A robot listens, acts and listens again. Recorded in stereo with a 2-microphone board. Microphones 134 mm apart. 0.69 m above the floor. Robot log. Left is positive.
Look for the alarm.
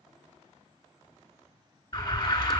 note: The alarm: about 30° left or 150° left.
cmd yaw +30
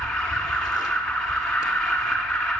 end: Found it: an alarm, straight ahead, 1 to 2 m away.